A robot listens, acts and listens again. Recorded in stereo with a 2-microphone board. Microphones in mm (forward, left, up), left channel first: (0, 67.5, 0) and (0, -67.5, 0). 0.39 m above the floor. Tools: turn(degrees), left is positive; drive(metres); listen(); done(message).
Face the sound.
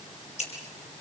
turn(degrees=55)
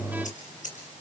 turn(degrees=65)
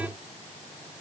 listen()
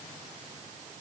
listen()
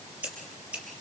turn(degrees=-10)
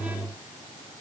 listen()
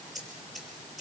done("Found it: scissors, straight ahead.")